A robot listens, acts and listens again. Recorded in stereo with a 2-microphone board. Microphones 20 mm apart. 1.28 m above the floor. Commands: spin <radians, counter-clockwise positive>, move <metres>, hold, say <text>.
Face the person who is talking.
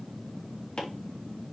hold
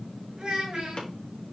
spin -0.70
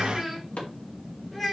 say Facing the child speaking, over 4 m away.